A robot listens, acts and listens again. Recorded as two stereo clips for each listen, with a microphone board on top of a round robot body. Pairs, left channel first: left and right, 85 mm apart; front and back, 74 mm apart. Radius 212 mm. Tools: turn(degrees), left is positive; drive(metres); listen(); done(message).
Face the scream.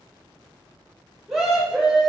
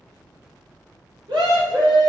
turn(degrees=-175)
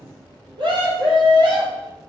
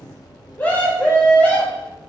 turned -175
turn(degrees=-70)
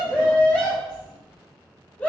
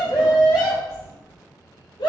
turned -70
turn(degrees=15)
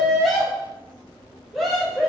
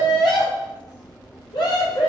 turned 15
done("Found it: a scream, straight ahead.")